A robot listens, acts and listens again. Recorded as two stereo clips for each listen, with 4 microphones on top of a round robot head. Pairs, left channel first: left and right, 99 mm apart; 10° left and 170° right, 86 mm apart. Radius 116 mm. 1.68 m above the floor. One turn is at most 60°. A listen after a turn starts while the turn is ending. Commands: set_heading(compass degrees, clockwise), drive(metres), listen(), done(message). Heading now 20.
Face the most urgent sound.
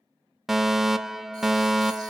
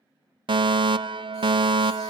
set_heading(80)
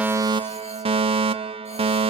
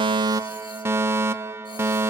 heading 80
set_heading(140)
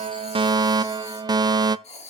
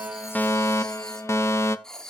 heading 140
set_heading(180)
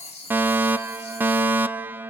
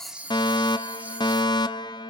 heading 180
set_heading(200)
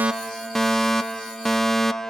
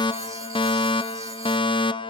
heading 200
done("Found it: a fire alarm, straight ahead, under 1 m away.")